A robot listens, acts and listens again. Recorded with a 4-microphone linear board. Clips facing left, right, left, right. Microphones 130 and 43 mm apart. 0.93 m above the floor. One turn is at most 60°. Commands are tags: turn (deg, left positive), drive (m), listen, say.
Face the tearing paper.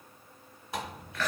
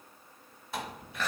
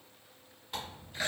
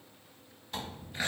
<turn deg="20"/>
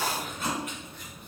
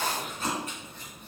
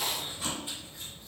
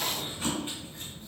<listen/>
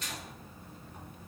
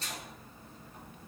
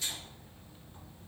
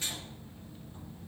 <listen/>
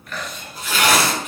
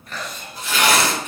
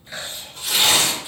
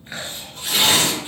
<say>Facing the tearing paper.</say>